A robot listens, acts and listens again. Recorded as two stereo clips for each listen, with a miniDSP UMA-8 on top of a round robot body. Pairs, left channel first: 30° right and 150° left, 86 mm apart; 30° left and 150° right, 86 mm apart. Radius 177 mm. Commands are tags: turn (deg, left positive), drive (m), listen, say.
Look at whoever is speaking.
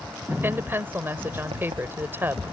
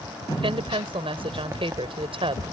<turn deg="-145"/>
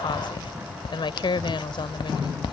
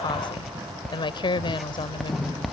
<say>Facing the woman speaking.</say>